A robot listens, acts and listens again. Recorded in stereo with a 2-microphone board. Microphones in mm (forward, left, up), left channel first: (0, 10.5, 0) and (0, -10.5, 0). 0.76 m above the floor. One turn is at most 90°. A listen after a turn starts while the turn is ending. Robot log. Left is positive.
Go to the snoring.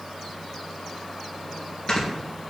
note: The snoring: about 45° left or 135° left.
cmd yaw +45
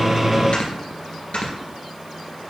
note: So it is at 85° left.
cmd yaw +85
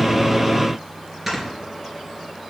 note: The snoring is now 20° right.
cmd yaw -20
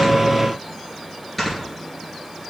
cmd fwd 1.0
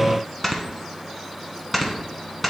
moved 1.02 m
cmd fwd 1.0
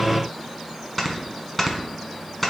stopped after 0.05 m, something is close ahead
note: The snoring is now 10° left.
cmd yaw +10
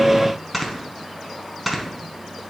end: Arrived at the snoring, straight ahead.